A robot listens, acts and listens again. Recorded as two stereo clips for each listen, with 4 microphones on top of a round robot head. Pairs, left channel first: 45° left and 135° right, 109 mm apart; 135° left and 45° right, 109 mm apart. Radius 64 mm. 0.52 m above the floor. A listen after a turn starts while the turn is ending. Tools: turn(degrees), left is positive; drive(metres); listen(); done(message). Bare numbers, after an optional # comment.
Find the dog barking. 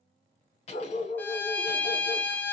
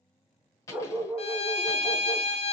# The dog barking: 40° left.
turn(40)
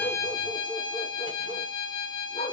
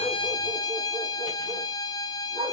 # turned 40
# The dog barking is now 10° left.
turn(10)
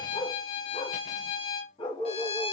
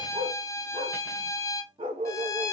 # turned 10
done("Facing the dog barking.")